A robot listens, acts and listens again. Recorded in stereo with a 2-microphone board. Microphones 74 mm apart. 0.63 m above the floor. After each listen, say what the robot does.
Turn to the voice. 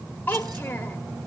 Turn 25° left.
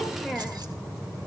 Found it: a child speaking, straight ahead, 1 to 2 m away.